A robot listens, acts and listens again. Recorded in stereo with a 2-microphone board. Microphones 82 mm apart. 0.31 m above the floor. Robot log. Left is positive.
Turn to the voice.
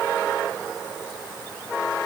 cmd idle
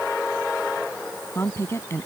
note: The woman speaking: about 30° left or 150° left.
cmd yaw +30
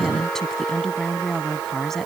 end: Found it: a woman speaking, straight ahead.